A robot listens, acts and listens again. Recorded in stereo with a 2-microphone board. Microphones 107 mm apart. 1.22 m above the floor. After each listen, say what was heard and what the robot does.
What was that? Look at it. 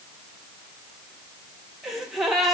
Turn 30° left.
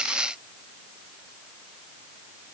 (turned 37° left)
Keep listening.
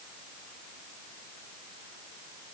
I heard a gasp, but can't make it out now. It was about 40° right or 145° left.